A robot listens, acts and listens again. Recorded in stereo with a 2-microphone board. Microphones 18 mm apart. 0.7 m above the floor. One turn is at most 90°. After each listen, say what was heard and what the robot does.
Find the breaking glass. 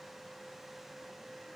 Keep listening.
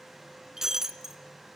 The breaking glass: about 25° right or 155° right. Turn 25° right.
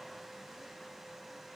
Keep listening.
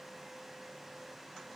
I heard breaking glass, but can't make it out now. It was about straight ahead or 130° right.